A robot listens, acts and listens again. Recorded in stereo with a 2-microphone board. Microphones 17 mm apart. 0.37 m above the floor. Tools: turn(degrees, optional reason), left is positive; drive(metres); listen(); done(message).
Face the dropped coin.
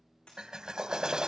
turn(degrees=90)
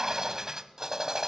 done("I heard a dropped coin from this way, but can't make it out now.")